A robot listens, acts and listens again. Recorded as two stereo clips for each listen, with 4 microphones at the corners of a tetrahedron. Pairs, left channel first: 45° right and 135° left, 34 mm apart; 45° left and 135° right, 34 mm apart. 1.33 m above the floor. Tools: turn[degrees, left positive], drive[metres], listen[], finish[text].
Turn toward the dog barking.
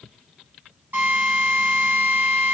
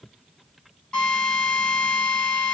Action: listen[]
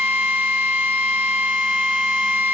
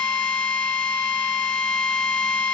Action: listen[]
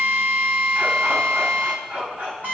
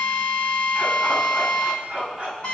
Thought: The dog barking: 165° left.
Action: turn[165]
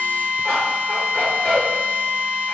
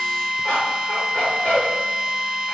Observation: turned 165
Action: finish[Facing the dog barking.]